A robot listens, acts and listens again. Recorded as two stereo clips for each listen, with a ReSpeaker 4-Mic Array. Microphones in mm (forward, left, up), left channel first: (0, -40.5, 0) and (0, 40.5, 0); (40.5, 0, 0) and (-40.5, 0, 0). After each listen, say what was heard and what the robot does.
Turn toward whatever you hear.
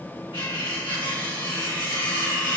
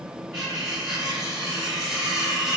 The cutlery clinking: 95° right. Turn 95° right.
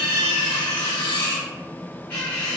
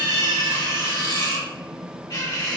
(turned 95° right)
The cutlery clinking is now 30° right. Turn 30° right.
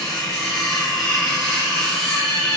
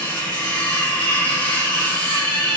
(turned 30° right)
Facing the cutlery clinking, 1 to 2 m away.